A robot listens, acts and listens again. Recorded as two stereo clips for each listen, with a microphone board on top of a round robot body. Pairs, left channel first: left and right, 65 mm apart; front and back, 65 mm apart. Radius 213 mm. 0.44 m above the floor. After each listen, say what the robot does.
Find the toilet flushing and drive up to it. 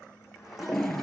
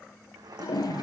Drive 1.0 m forward.
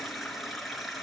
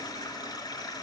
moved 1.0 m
Drive 1.0 m forward.
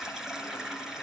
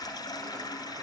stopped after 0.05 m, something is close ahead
Something is in my way. I am facing the toilet flushing but have not reached it.